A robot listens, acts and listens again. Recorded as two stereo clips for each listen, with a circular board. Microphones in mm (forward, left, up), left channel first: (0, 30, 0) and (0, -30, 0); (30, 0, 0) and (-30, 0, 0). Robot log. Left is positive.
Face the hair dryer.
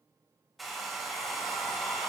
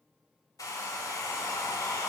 end: Facing the hair dryer, 1 to 2 m away.